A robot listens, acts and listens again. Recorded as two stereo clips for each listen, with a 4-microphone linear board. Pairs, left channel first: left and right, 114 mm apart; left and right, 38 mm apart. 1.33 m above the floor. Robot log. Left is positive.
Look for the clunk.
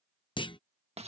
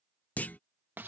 note: The clunk: about 45° left or 135° left.
cmd yaw +45
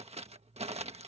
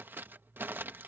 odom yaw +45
cmd idle
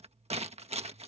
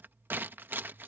end: I heard a clunk, but can't make it out now. It was about straight ahead or 90° left.